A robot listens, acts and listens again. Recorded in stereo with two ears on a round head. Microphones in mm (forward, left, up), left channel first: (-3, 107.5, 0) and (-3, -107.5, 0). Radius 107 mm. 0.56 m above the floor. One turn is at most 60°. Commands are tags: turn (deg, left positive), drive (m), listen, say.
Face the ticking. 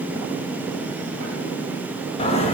<listen/>
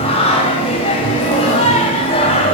<listen/>
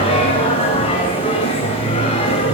<say>I can't make out ticking to turn to.</say>